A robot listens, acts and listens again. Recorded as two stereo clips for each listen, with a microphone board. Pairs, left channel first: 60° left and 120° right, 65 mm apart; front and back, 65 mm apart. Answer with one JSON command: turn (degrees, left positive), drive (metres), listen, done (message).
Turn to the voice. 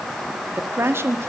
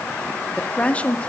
{"turn": -70}
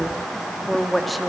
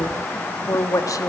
{"turn": -30}
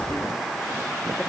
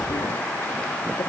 {"listen": true}
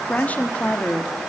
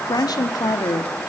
{"done": "Facing the woman speaking, 1 to 2 m away."}